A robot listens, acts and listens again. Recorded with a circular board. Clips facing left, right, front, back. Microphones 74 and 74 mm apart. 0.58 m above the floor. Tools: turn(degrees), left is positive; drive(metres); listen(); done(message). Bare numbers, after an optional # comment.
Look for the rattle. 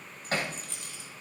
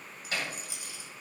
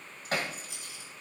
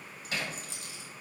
# The rattle: 170° right.
turn(-170)
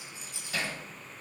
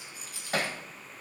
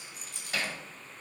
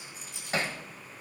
# The rattle is now 25° left.
turn(25)
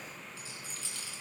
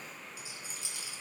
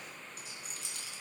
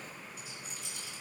# The rattle is now 20° right.
turn(-20)
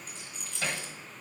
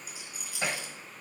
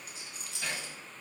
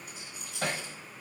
# The rattle is now 10° right.
turn(-10)
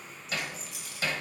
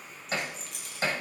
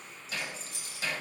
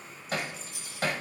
done("Facing the rattle.")